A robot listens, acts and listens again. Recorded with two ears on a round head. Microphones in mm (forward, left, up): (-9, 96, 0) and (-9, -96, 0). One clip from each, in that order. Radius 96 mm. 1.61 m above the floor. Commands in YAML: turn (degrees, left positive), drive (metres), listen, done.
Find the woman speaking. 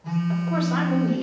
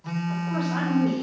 turn: 20
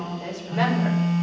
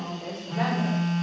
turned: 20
turn: 40
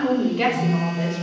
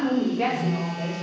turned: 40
turn: 105
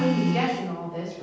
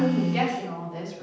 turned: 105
turn: -10
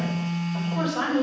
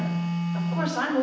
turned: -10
done: "Found it: a woman speaking, straight ahead."